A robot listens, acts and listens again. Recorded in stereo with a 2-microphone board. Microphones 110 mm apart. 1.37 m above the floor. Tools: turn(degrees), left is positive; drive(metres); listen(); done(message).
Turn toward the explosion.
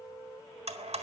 listen()
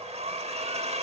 listen()
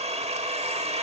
done("I can't make out an explosion to turn to.")